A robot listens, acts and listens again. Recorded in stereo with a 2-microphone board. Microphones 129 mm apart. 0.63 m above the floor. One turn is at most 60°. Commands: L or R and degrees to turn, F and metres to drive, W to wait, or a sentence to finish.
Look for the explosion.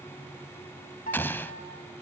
L30
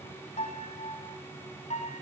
W
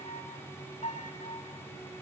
I heard an explosion, but can't make it out now. It was about 15° right or 135° left.